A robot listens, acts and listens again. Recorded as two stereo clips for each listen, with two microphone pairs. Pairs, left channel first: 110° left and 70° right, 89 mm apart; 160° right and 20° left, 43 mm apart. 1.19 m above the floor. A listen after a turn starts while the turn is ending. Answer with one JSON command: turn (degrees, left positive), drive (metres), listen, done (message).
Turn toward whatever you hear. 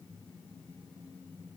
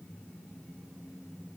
{"listen": true}
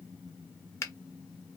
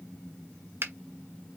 {"turn": 50}
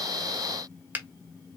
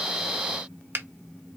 {"done": "Found it: a finger snap, straight ahead."}